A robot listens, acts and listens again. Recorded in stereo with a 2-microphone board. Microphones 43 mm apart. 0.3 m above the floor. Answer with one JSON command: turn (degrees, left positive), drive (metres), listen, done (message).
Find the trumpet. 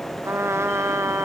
{"turn": -90}
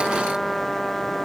{"done": "Facing the trumpet."}